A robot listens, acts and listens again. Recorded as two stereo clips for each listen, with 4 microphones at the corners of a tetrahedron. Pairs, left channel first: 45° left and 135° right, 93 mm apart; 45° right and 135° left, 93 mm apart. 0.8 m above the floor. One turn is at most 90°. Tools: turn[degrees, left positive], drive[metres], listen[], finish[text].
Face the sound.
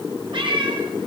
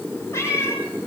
Thought: The cat meowing: 105° right.
Action: turn[-90]
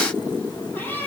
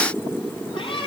Thought: The cat meowing is now 25° right.
Action: turn[-25]
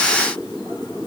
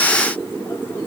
Action: listen[]
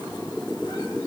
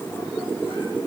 Action: listen[]
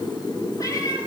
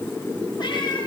Action: finish[I heard a cat meowing from this way, but can't make it out now.]